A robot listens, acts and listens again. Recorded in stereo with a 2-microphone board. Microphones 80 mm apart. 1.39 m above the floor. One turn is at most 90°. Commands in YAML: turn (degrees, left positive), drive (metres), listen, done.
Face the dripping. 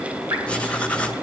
turn: -45
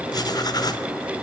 listen: true
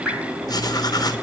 done: "Found it: dripping, straight ahead, 2 to 4 m away."